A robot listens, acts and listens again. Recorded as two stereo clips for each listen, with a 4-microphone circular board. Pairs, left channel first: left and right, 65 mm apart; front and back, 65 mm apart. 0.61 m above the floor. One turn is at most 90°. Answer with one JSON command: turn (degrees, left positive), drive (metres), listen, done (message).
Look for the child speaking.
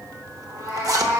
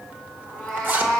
{"listen": true}
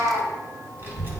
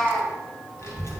{"turn": -35}
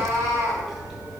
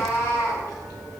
{"done": "Found it: a child speaking, straight ahead, 2 to 4 m away."}